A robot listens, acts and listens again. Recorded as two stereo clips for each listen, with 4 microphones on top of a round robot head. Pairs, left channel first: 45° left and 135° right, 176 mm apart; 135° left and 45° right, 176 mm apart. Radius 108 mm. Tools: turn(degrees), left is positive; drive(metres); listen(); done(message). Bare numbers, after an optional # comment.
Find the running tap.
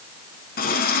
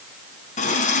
# The running tap: 85° left.
turn(85)
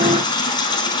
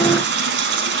# The running tap is now 25° right.
turn(-25)
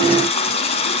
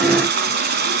# The running tap is now 15° right.
turn(-15)
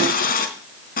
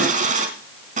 done("Found it: a running tap, straight ahead, 2 to 4 m away.")